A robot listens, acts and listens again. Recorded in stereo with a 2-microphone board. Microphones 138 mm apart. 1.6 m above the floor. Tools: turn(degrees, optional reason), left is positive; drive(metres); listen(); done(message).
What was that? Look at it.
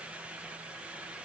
listen()
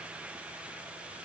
listen()
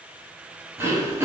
turn(degrees=-20, reason="The throat clearing: about 20° right or 160° right.")
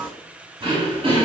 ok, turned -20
turn(degrees=-140, reason="So it is at 140° right.")
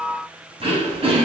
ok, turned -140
turn(degrees=-50, reason="The throat clearing is now 50° right.")
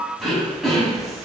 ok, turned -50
done("Facing the throat clearing.")